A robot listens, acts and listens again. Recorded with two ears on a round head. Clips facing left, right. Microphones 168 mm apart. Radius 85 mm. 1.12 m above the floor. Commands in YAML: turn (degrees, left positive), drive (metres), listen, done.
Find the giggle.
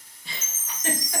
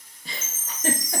turn: -35
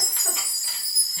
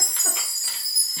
listen: true
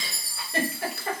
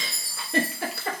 turn: -105
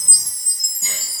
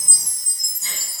listen: true
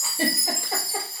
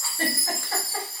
turn: 15
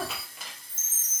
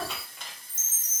done: "Found it: a giggle, straight ahead, under 1 m away."